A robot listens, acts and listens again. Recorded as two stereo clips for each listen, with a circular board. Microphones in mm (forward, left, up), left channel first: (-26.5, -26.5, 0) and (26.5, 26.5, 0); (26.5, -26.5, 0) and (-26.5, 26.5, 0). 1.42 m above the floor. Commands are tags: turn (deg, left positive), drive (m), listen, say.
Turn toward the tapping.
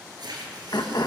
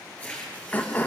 <listen/>
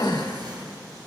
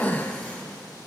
<listen/>
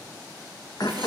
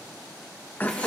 <say>I can't make out tapping to turn to.</say>